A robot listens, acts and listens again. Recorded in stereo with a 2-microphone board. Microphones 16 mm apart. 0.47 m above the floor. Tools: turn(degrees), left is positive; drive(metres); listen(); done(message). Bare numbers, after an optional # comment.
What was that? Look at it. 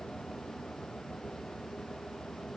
listen()
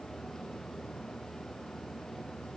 listen()
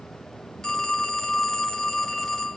# The phone ringing: about 50° left or 130° left.
turn(50)
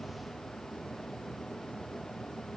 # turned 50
listen()
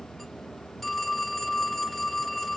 # So it is at 15° left.
turn(15)
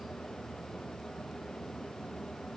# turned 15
listen()
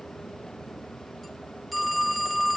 done("Facing the phone ringing.")